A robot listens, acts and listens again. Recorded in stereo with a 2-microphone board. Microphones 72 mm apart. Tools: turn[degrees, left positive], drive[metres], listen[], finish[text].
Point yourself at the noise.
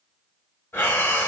Thought: The breathing: about 30° left or 150° left.
Action: turn[30]
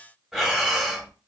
Action: finish[Facing the breathing.]